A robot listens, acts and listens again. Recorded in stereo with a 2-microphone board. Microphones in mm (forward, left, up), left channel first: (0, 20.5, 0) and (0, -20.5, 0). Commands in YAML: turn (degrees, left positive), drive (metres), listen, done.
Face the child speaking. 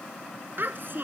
turn: -55
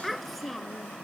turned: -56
done: "Facing the child speaking."